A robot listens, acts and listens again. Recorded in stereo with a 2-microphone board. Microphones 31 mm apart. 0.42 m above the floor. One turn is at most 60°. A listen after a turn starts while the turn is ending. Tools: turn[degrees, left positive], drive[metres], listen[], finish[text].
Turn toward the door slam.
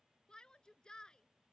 Action: listen[]
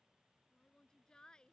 Action: listen[]
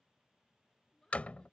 Thought: The door slam: about 50° left or 130° left.
Action: turn[50]
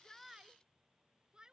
Action: listen[]
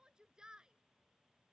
Action: finish[I heard a door slam, but can't make it out now. It was about straight ahead or 80° left.]